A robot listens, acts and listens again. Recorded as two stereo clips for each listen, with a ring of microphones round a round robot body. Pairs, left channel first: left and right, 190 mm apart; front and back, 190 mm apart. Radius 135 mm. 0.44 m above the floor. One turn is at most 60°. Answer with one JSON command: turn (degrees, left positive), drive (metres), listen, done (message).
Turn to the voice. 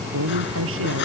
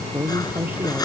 {"turn": -60}
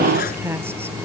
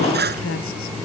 {"turn": -10}
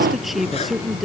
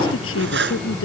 {"done": "Facing the man speaking."}